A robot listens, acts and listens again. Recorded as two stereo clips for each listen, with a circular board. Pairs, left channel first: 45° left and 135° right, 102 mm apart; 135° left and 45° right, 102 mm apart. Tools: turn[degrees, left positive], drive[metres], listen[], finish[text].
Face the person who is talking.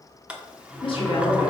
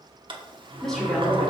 Thought: The woman speaking: 50° left.
Action: turn[50]
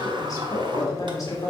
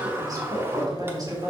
Action: finish[Facing the woman speaking.]